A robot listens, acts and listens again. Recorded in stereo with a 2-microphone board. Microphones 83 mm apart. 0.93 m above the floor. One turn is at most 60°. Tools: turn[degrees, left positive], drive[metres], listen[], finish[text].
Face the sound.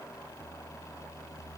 Action: listen[]
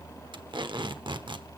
Thought: The tape being pulled: about 70° right or 110° right.
Action: turn[-60]
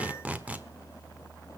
Thought: So it is at 20° right.
Action: turn[-20]
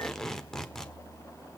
Action: finish[Found it: tape being pulled, straight ahead.]